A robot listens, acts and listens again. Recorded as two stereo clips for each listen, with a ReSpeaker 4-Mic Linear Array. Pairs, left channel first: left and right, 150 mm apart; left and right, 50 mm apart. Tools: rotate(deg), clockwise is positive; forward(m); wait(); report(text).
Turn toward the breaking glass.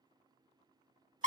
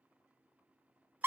wait()
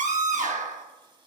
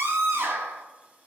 wait()
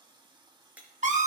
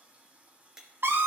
rotate(30)
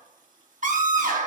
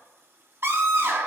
wait()
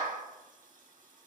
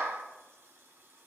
report("I heard breaking glass, but can't make it out now. It was about 20° left or 140° right.")